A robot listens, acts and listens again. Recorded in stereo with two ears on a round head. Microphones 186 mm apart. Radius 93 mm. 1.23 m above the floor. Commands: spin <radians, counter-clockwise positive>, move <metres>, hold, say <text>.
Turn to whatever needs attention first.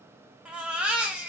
spin -0.52
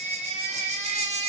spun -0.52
spin -2.53
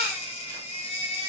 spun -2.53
spin 0.61
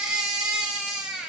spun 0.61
say Found it: a baby crying, straight ahead.